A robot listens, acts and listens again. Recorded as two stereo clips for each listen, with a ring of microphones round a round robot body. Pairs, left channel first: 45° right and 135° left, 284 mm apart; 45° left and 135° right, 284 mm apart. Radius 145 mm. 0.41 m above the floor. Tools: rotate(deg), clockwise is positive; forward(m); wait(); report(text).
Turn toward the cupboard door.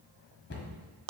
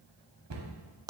rotate(100)
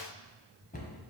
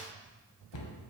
rotate(-20)
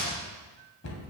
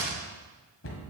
report("Found it: a cupboard door, straight ahead.")